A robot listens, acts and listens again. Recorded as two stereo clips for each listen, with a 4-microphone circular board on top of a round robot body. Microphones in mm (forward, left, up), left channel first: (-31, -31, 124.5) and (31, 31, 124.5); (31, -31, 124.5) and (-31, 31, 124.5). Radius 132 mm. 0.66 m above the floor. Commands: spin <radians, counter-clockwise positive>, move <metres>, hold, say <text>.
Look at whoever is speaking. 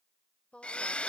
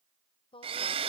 spin -0.96
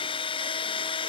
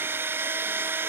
hold
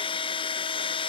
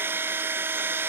hold
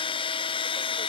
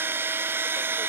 say Facing where the woman speaking came from. I can't hear it now.